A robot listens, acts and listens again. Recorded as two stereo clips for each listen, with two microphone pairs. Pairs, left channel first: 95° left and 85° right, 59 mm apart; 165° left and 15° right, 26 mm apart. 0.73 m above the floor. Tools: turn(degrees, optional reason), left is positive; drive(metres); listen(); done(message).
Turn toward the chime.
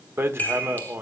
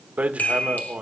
turn(degrees=155, reason="The chime: 155° left.")
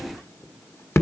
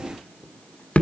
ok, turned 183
turn(degrees=-25, reason="Nothing new. It was at 25° right.")
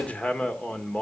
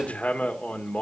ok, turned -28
listen()
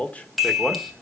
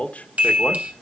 done("Facing the chime, 2 to 4 m away.")